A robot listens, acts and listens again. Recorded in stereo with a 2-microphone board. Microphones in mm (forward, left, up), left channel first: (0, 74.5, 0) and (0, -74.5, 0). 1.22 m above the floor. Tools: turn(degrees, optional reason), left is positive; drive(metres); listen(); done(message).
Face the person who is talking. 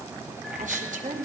turn(degrees=-65, reason="The woman speaking: about 65° right or 115° right.")
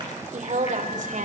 turn(degrees=-60, reason="So it is at 60° right.")
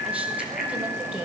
turn(degrees=-10, reason="The woman speaking is now 10° right.")
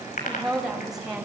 done("Found it: a woman speaking, straight ahead.")